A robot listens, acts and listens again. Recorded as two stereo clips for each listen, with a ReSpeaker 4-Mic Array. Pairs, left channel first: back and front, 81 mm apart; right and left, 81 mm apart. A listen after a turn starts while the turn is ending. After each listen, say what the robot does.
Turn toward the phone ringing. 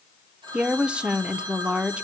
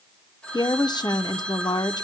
Turn 10° right.
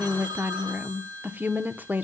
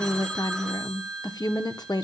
Found it: a phone ringing, straight ahead, over 4 m away.